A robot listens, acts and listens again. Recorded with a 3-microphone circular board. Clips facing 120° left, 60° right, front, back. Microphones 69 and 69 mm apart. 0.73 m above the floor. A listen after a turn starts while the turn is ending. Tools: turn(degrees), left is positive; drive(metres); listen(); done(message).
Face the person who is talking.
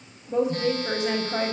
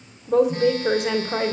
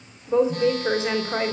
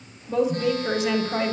turn(degrees=-60)
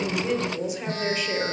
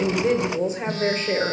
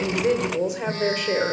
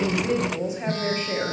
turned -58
done("Facing the woman speaking.")